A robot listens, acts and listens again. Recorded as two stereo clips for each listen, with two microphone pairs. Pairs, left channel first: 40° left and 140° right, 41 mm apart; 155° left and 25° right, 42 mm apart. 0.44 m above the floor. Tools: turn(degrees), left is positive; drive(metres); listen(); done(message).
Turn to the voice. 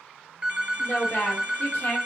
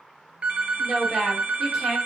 turn(degrees=60)
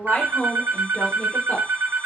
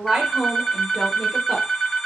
turn(degrees=30)
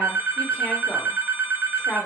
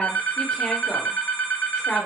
turn(degrees=85)
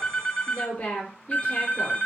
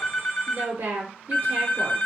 turn(degrees=-10)
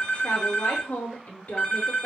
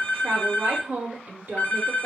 done("Found it: a woman speaking, straight ahead, 1 to 2 m away.")